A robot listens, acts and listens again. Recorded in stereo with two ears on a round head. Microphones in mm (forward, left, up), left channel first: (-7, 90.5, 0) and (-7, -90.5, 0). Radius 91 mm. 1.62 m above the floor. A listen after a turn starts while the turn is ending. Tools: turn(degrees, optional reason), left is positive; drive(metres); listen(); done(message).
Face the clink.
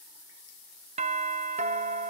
listen()
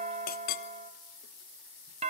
turn(degrees=50, reason="The clink: about 50° left or 130° left.")
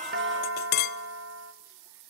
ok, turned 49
turn(degrees=70, reason="So it is at 70° left.")
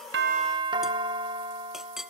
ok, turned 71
done("Found it: a clink, straight ahead, under 1 m away.")